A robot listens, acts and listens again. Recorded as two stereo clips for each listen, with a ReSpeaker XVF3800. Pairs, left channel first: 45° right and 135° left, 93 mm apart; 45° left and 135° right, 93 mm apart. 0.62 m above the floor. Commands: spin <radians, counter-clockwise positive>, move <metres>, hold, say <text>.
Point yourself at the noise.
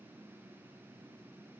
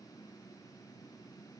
hold
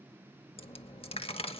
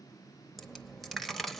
spin -0.70
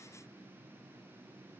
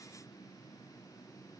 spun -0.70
say Facing where the dropped coin came from. I can't hear it now.